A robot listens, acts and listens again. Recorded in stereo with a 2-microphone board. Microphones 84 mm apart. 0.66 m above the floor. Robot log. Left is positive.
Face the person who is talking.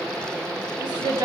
note: The woman speaking: about 60° right or 120° right.
cmd yaw -60
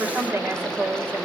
note: So it is at 25° right.
cmd yaw -25
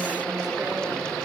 cmd idle
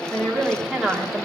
end: Found it: a woman speaking, straight ahead, 1 to 2 m away.